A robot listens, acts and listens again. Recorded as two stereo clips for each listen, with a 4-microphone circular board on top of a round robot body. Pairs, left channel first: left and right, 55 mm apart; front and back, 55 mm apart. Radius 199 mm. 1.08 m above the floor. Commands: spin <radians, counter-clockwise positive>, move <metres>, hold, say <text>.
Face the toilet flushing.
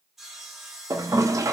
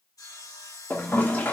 spin -1.05
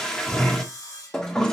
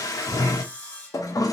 spin 0.17
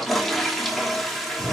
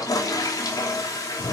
say Found it: a toilet flushing, straight ahead, 1 to 2 m away.